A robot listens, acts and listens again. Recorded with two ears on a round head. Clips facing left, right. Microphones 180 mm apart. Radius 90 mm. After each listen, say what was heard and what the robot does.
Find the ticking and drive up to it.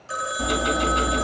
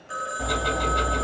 Turn 30° left.
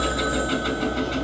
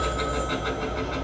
So it is at 135° left. Turn 135° left.
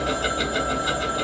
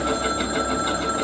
The ticking is now 10° left. Turn 10° left.
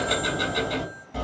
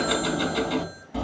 Drive 1.0 m forward.
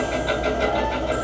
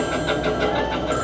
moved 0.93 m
Drive 1.0 m forward.
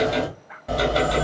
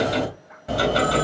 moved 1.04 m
Drive 1.0 m forward.
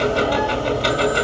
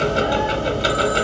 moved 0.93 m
The ticking is now 10° right. Turn 10° right.
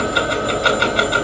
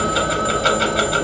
Drive 1.0 m forward.
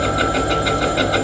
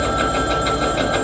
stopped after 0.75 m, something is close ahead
I am next to the ticking.